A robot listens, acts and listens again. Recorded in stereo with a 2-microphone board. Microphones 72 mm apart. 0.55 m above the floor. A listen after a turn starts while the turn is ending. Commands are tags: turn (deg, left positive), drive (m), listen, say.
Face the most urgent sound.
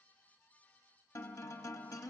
<listen/>
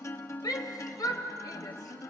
<turn deg="60"/>
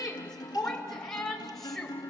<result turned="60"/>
<say>Found it: a shout, straight ahead, 2 to 4 m away.</say>